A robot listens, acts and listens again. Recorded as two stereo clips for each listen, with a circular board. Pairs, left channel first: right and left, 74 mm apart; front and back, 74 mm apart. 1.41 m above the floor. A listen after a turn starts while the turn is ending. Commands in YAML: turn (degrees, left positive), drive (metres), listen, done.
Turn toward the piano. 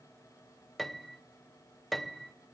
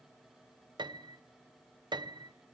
turn: 180
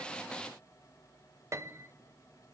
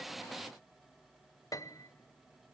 turn: 40
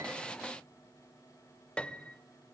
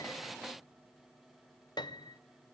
turn: -15
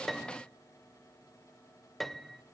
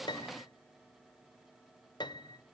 done: "Facing the piano, under 1 m away."